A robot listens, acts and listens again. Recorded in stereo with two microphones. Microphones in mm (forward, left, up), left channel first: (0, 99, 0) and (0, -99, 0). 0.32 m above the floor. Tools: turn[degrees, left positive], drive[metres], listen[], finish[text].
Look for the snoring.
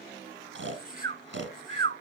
Thought: The snoring: about 70° right or 110° right.
Action: turn[-70]
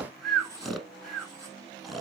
Action: finish[Facing the snoring, 1 to 2 m away.]